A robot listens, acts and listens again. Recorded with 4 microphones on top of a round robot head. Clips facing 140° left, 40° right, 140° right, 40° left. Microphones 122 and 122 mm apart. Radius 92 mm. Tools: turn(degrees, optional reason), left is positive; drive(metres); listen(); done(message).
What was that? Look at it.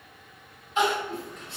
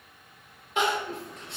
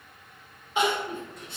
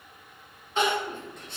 turn(degrees=-65, reason="The crying: 65° right.")
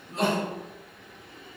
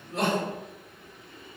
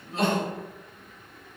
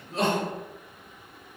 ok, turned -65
turn(degrees=-15, reason="The crying is now 15° right.")
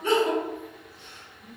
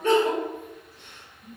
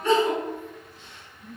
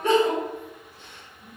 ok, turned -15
done("Found it: crying, straight ahead, 1 to 2 m away.")